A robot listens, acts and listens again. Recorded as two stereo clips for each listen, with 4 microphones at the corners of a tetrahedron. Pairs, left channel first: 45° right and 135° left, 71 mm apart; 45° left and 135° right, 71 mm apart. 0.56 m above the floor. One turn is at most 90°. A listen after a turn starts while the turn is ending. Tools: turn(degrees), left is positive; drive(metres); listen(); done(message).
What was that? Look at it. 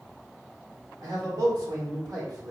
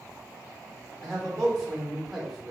turn(degrees=90)
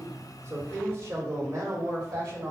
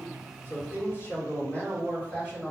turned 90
turn(degrees=90)
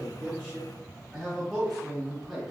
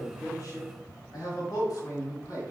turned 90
turn(degrees=45)
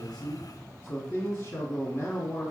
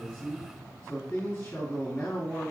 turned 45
done("Found it: a man speaking, straight ahead.")